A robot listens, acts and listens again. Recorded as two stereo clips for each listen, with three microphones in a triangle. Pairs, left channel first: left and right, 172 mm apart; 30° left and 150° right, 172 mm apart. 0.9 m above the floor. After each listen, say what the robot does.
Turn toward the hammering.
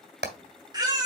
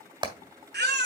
Turn 85° right.
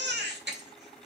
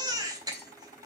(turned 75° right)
Turn 10° right.
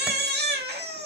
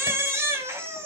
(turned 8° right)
Keep listening.
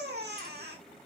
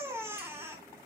Facing where the hammering came from. I can't hear it now.